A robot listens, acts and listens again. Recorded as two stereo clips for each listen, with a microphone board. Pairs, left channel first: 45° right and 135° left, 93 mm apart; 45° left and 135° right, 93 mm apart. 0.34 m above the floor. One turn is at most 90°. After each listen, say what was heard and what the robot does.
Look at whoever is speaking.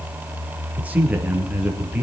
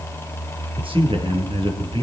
The man speaking: 150° right. Turn 90° right.
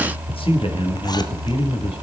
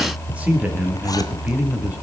The man speaking is now 60° right. Turn 60° right.
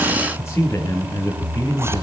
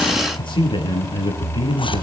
The man speaking is now 15° left. Turn 15° left.
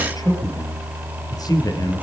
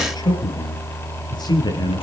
Facing the man speaking, over 4 m away.